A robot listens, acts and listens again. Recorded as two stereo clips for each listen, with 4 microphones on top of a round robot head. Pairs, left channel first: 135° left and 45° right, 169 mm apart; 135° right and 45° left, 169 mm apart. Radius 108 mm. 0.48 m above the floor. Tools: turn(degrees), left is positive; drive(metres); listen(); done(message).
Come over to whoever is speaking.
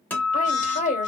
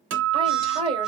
turn(degrees=100)
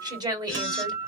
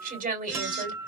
turn(degrees=20)
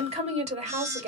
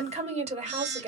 drive(metres=1.0)
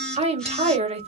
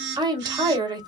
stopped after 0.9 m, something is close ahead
turn(degrees=-10)
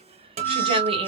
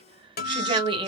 done("I am next to the woman speaking.")